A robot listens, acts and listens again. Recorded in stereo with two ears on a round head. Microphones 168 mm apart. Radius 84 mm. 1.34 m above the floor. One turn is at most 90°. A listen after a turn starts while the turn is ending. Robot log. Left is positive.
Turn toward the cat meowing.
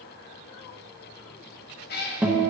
note: The cat meowing: about 55° left or 125° left.
cmd yaw +55
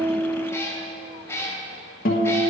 note: So it is at 15° left.
cmd yaw +15
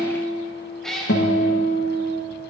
end: Facing the cat meowing.